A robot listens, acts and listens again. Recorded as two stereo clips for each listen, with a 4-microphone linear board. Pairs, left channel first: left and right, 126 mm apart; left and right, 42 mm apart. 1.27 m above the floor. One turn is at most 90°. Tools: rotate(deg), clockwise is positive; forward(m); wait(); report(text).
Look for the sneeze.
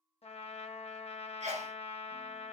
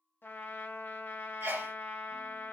rotate(60)
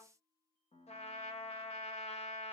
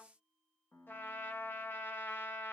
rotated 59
wait()
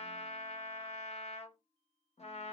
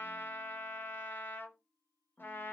report("I heard a sneeze, but can't make it out now. It was about straight ahead or 60° right.")